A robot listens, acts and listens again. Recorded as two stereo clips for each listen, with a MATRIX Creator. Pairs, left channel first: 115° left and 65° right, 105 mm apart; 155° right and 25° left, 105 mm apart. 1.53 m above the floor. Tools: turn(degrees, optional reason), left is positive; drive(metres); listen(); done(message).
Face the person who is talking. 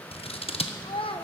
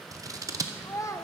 turn(degrees=140, reason="The child speaking: 140° left.")
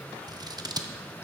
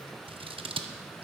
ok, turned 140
listen()
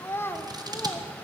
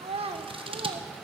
turn(degrees=45, reason="The child speaking is now 45° left.")
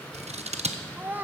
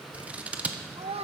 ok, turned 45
done("Found it: a child speaking, straight ahead.")